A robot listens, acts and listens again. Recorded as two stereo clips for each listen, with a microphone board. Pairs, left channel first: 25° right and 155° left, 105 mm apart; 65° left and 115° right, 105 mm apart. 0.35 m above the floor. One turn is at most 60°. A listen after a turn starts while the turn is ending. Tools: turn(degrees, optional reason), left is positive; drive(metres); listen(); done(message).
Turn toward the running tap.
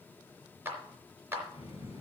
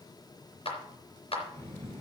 done("Found it: a running tap, straight ahead, over 4 m away.")